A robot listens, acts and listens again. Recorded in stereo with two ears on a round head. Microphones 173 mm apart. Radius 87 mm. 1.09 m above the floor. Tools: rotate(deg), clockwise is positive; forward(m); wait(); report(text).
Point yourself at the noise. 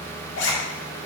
rotate(-65)
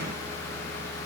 wait()
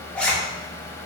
report("Found it: a zipper, straight ahead.")